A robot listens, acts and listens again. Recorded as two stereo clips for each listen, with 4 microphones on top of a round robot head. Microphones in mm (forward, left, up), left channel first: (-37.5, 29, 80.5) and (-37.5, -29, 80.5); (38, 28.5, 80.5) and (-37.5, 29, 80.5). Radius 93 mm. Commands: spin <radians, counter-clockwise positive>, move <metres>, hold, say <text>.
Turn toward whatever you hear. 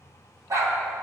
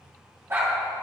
spin -2.09
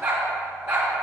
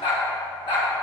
spin -0.35
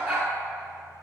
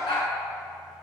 say Facing the dog barking, 2 to 4 m away.